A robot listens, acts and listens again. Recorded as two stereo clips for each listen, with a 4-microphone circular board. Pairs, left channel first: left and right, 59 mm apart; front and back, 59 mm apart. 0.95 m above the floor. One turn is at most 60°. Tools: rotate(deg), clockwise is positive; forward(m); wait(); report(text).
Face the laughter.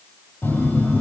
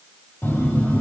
wait()
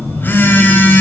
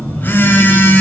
wait()
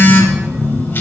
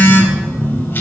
report("I can't make out laughter, only a phone buzzing.")